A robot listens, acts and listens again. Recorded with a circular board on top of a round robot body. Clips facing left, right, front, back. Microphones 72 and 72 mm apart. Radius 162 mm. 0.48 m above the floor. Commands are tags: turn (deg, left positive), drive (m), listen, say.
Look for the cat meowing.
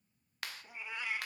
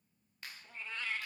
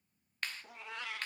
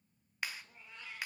<turn deg="15"/>
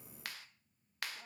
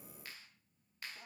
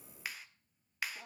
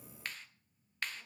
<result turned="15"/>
<listen/>
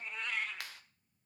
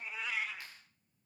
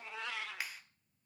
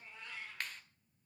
<say>Facing the cat meowing.</say>